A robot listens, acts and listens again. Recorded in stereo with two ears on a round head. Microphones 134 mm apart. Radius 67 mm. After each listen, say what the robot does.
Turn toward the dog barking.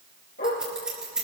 Turn 65° left.
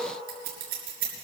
Keep listening.
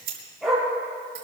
Facing the dog barking.